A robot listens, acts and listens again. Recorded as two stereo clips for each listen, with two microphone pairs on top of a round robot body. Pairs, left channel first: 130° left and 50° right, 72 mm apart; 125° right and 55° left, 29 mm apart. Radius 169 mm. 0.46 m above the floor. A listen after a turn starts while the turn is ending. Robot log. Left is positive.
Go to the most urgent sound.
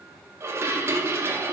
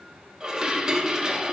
cmd idle
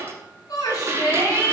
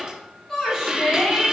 note: The shout: 165° left.
cmd yaw +165
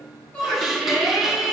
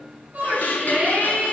note: The shout is now 40° left.
cmd yaw +40
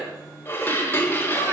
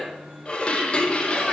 cmd idle
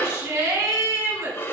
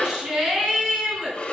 cmd fwd 1.0
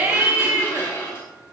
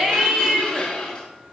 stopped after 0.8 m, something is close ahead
end: I am next to the shout.